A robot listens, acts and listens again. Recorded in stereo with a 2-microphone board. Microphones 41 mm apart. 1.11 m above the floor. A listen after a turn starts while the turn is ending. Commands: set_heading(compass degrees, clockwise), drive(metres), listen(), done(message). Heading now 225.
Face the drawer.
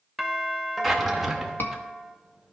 set_heading(255)
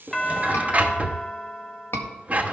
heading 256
set_heading(41)
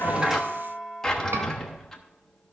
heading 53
set_heading(38)
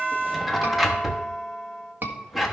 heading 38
done("Facing the drawer.")